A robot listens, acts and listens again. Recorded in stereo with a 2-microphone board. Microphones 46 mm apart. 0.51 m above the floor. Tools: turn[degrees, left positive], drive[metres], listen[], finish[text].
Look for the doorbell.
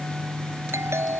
Thought: The doorbell: about 75° right or 105° right.
Action: turn[-75]
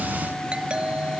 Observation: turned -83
Thought: So it is at 25° right.
Action: turn[-25]
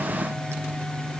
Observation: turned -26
Action: listen[]
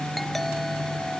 Action: listen[]
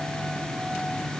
Action: finish[I heard a doorbell from this way, but can't make it out now.]